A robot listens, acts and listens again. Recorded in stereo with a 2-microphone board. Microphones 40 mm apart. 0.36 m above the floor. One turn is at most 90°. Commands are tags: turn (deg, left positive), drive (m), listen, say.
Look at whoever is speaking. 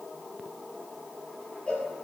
<listen/>
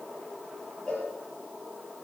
<listen/>
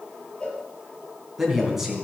<turn deg="-30"/>
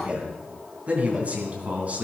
<turn deg="-90"/>
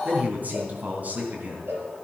<turn deg="-50"/>
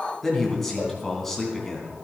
<say>Found it: a man speaking, straight ahead.</say>